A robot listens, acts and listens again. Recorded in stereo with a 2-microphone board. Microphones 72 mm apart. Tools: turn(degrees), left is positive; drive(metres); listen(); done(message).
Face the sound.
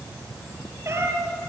turn(degrees=-40)
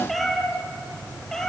done("Facing the cat meowing.")